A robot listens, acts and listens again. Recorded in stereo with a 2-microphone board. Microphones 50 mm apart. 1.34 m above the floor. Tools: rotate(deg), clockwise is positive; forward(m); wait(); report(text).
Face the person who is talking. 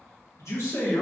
rotate(-90)
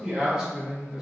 rotate(10)
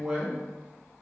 report("Found it: a man speaking, straight ahead.")